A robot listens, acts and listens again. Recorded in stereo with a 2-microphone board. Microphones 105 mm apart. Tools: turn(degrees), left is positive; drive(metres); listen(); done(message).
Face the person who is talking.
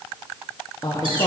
turn(degrees=45)
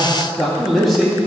done("Facing the man speaking.")